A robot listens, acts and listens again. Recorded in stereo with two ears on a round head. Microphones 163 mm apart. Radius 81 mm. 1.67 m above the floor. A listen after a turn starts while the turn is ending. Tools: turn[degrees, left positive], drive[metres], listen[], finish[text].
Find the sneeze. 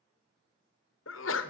Action: turn[90]
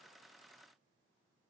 Action: finish[I heard a sneeze from this way, but can't make it out now.]